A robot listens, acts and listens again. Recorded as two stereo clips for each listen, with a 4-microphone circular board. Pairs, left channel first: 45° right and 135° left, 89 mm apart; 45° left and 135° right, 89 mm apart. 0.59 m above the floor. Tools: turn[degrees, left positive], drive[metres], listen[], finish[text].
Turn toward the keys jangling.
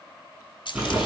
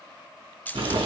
Thought: The keys jangling: 25° right.
Action: turn[-25]
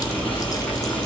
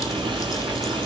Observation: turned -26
Action: listen[]
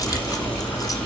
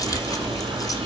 Action: listen[]
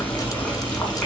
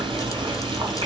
Action: finish[I heard keys jangling from this way, but can't make it out now.]